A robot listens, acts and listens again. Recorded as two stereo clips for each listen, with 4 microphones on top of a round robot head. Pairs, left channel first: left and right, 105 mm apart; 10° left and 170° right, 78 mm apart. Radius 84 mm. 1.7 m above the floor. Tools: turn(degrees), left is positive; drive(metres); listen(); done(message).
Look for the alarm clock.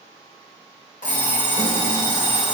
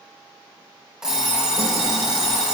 turn(degrees=110)
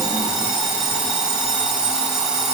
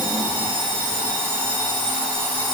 turn(degrees=-10)
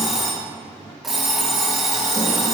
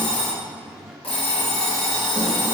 done("Facing the alarm clock.")